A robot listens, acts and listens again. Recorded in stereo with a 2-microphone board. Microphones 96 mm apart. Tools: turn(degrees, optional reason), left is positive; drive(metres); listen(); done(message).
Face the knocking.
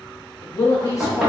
turn(degrees=30)
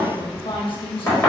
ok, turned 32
turn(degrees=150, reason="So it is at 150° left.")
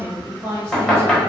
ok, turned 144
done("Found it: knocking, straight ahead, 1 to 2 m away.")